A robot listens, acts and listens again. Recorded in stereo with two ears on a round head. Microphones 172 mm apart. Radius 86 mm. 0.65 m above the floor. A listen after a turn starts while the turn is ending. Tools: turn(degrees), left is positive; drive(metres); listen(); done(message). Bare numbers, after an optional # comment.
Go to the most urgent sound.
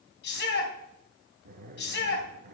# The shout: about 60° left or 120° left.
turn(60)
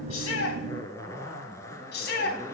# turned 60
# So it is at 55° left.
turn(55)
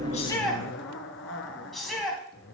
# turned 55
drive(1.0)
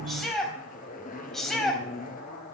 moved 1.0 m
drive(1.0)
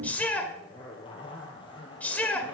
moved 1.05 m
# The shout is now 10° left.
turn(10)
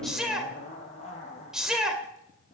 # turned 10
drive(1.0)
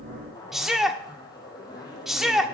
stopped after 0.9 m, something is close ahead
done("Arrived at the shout, straight ahead.")